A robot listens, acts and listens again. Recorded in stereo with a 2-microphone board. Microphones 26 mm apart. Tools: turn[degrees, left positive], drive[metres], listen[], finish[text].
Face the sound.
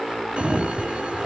Thought: The sliding door: about 50° right or 130° right.
Action: turn[-50]
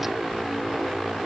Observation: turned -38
Action: listen[]
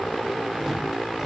Action: listen[]
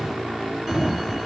Thought: So it is at 20° right.
Action: turn[-20]
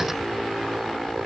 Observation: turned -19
Action: listen[]
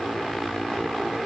Action: listen[]
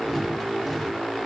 Action: finish[Facing where the sliding door came from. I can't hear it now.]